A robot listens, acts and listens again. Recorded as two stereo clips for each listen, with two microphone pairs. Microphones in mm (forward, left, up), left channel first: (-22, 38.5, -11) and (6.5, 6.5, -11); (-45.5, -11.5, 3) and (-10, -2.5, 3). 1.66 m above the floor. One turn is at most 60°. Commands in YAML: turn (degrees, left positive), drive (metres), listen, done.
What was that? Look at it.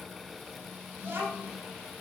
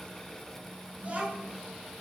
turn: -30
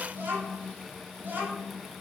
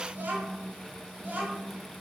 turn: -15
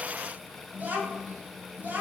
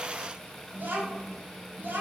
done: "Facing the child speaking."